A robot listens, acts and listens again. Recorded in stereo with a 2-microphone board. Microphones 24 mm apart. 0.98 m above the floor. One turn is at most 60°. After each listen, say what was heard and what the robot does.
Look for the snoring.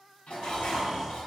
The snoring: about 50° right or 130° right. Turn 50° right.
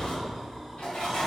Found it: snoring, straight ahead, 1 to 2 m away.